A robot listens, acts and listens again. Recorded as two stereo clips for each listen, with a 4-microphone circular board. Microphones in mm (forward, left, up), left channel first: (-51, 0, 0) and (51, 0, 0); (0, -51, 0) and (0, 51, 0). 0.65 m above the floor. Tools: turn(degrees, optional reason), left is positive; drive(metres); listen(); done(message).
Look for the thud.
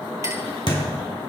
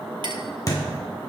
turn(degrees=-145, reason="The thud: 145° right.")
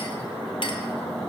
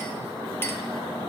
done("Facing where the thud came from. I can't hear it now.")